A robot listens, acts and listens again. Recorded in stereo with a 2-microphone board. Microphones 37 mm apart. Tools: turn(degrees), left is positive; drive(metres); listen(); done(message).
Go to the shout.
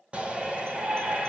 turn(degrees=-30)
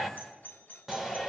drive(metres=1.0)
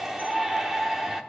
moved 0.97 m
turn(degrees=-10)
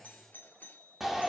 drive(metres=1.0)
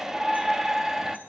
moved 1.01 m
turn(degrees=-15)
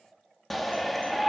drive(metres=1.0)
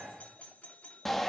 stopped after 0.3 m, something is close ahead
turn(degrees=10)
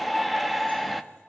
done("Arrived at the shout, straight ahead.")